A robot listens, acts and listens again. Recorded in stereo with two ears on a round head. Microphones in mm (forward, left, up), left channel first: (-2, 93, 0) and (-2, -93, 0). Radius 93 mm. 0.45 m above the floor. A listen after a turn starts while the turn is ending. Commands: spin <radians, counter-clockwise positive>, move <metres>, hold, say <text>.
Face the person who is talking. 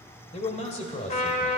spin 0.52
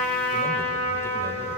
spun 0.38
hold
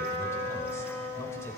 hold
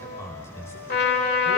spin 0.26
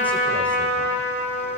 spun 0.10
spin 0.17
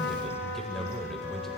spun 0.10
say Found it: a man speaking, straight ahead, 1 to 2 m away.